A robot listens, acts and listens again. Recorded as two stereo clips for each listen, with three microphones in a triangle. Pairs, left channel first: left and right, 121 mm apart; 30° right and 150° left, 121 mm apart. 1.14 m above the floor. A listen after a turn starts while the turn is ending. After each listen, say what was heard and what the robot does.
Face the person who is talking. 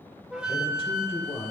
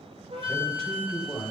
The man speaking: 55° left. Turn 55° left.
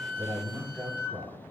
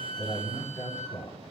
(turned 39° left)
The man speaking is now 15° left. Turn 15° left.
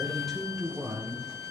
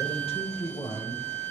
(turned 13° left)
Found it: a man speaking, straight ahead, over 4 m away.